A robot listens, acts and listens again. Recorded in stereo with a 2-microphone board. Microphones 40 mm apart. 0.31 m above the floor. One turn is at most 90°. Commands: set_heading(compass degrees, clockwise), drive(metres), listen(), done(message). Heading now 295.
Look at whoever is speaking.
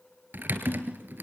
listen()
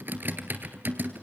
listen()
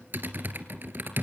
done("I can't make out anyone speaking to turn to.")